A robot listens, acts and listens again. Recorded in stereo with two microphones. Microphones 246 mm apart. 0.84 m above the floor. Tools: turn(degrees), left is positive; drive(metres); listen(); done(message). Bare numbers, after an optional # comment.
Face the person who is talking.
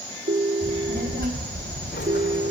# The child speaking: about 50° right or 130° right.
turn(-50)
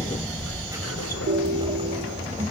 # So it is at 30° right.
turn(-30)
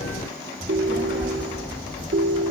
# The child speaking is now 15° right.
turn(-15)
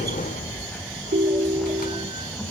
done("Facing the child speaking.")